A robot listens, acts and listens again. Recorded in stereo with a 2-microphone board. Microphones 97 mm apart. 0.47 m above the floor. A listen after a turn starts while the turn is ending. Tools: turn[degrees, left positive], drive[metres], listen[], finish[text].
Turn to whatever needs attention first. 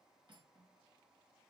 Action: listen[]
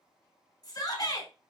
Thought: The shout: about 40° left or 140° left.
Action: turn[40]
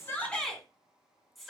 Action: finish[Found it: a shout, straight ahead.]